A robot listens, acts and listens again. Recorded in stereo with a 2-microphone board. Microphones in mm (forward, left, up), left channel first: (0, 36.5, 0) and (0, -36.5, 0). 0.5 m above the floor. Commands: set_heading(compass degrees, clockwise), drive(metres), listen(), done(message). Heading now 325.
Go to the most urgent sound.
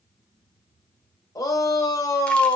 set_heading(265)
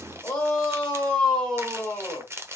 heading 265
set_heading(245)
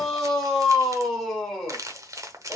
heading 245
drive(1.0)
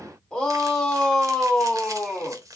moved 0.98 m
set_heading(225)
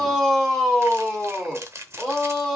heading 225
drive(1.0)
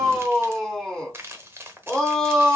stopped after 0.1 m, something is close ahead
set_heading(215)
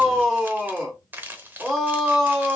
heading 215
done("Arrived at the shout, straight ahead.")